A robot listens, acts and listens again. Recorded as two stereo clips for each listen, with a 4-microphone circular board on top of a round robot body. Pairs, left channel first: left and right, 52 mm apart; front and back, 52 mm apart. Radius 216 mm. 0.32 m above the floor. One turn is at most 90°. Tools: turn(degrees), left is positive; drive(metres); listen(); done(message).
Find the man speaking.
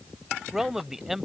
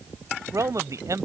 turn(degrees=-90)
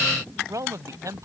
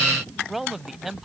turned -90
turn(degrees=-90)
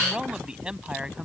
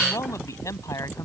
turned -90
turn(degrees=-20)
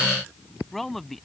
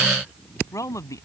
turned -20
done("Found it: a man speaking, straight ahead.")